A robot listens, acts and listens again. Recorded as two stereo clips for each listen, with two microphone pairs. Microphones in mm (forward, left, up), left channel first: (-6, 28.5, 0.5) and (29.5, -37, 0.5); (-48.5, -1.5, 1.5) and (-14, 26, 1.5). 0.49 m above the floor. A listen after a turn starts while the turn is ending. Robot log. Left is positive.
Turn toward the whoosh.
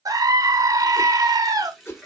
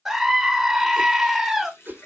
note: The whoosh: 70° left.
cmd yaw +70
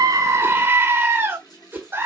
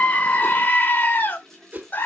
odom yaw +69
end: Facing the whoosh.